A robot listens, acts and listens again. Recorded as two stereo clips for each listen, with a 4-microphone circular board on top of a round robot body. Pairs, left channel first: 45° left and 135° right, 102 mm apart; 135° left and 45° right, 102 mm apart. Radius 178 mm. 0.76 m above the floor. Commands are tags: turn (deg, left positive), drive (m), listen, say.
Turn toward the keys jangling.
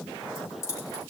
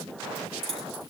<turn deg="-15"/>
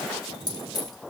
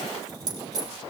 <say>Found it: keys jangling, straight ahead, over 4 m away.</say>